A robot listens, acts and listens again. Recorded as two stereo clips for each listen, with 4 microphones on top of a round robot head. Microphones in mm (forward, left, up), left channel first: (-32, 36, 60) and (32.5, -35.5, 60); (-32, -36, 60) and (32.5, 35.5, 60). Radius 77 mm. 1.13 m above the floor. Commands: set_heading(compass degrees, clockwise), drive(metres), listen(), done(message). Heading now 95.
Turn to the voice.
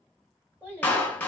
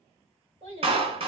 set_heading(75)
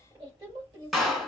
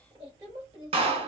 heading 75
done("Found it: a child speaking, straight ahead.")